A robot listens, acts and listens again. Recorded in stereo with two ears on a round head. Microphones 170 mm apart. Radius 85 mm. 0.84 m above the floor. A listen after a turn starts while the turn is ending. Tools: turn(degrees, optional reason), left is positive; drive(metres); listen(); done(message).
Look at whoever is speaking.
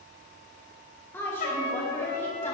turn(degrees=30)
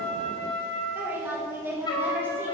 turn(degrees=-10, reason="So it is at 10° right.")
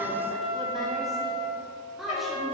done("Facing the woman speaking.")